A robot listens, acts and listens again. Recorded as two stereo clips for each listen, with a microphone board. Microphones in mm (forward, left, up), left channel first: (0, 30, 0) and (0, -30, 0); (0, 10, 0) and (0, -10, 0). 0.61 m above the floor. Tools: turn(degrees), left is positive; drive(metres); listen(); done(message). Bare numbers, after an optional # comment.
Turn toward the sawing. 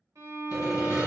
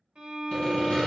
turn(90)
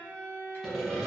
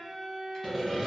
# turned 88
done("Found it: sawing, straight ahead.")